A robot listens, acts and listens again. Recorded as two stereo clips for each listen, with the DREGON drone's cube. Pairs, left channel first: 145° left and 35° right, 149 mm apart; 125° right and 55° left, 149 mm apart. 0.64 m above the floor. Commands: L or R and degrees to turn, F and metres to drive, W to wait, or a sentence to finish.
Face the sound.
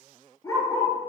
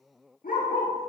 R150
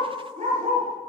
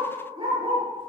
Found it: a dog barking, straight ahead.